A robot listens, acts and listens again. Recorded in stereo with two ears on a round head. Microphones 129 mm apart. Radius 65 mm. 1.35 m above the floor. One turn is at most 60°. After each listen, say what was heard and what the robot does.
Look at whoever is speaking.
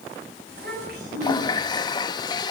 Turn 60° right.
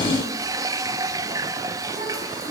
So it is at 30° right. Turn 30° right.
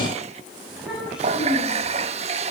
Facing the child speaking.